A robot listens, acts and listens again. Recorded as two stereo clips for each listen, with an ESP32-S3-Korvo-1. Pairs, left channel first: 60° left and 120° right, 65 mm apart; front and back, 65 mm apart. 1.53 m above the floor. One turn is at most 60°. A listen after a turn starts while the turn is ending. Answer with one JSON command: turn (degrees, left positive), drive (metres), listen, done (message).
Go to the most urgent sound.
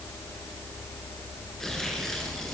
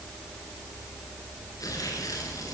{"listen": true}
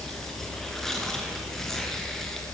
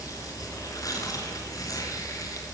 {"listen": true}
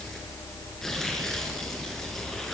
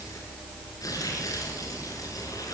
{"done": "I can't make out anything urgent to turn to."}